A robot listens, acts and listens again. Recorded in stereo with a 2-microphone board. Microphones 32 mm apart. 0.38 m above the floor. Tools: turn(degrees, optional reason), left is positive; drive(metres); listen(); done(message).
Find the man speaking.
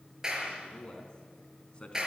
turn(degrees=30, reason="The man speaking: about 30° left or 150° left.")
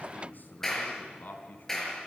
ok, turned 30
turn(degrees=110, reason="So it is at 110° left.")
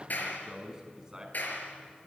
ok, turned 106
turn(degrees=-20, reason="The man speaking is now 20° right.")
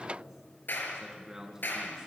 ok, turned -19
turn(degrees=-15, reason="The man speaking is now 15° right.")
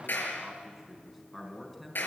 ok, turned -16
done("Found it: a man speaking, straight ahead, over 4 m away.")